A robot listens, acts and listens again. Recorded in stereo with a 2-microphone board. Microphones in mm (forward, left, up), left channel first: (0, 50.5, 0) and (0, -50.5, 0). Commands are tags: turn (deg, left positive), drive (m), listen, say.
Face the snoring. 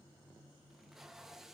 <listen/>
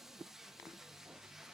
<listen/>
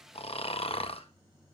<turn deg="75"/>
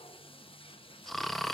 <say>Found it: snoring, straight ahead, under 1 m away.</say>